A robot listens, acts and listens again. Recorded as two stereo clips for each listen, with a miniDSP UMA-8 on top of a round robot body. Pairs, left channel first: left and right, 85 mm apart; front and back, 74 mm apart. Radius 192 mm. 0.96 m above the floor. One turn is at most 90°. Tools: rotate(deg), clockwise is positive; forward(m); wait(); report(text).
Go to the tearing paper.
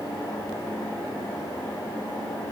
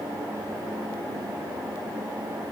wait()
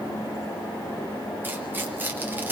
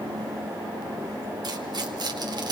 rotate(90)
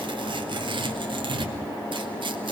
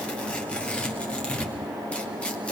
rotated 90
rotate(75)
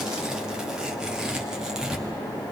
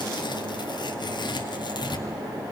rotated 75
rotate(10)
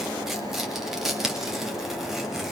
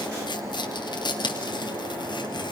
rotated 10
forward(1.0)
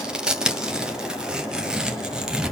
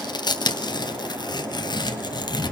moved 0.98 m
rotate(10)
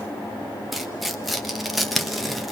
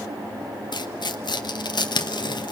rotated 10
forward(1.0)
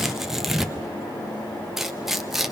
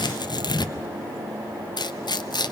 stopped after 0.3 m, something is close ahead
report("I am next to the tearing paper.")